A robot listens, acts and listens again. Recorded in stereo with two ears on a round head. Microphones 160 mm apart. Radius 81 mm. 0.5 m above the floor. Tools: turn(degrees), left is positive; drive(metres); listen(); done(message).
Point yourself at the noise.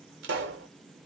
turn(degrees=-70)
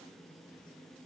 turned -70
listen()
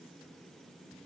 done("I heard a pop, but can't make it out now. It was about straight ahead or 40° right.")